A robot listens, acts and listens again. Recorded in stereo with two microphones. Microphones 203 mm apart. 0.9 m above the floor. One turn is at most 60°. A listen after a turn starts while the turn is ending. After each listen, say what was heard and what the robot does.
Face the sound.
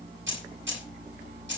The keys jangling: about 65° right or 115° right. Turn 60° right.
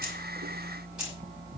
Keep listening.
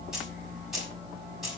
Found it: keys jangling, straight ahead.